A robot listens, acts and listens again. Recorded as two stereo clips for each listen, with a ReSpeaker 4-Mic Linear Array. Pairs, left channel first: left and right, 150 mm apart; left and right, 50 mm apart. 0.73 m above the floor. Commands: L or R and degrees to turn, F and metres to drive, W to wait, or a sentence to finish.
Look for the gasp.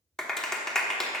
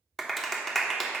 W
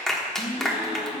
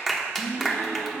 L40
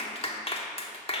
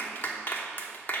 W
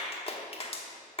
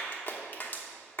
I heard a gasp, but can't make it out now. It was about straight ahead or 100° left.